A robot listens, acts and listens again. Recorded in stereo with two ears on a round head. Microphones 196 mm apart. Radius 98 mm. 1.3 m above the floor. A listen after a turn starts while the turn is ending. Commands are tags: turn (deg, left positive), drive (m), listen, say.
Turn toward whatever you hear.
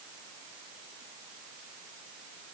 <listen/>
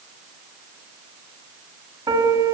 <turn deg="-20"/>
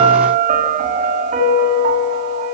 <turn deg="-145"/>
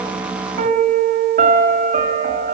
<turn deg="-35"/>
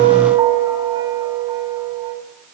<turn deg="-20"/>
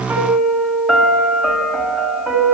<say>Found it: a piano, straight ahead.</say>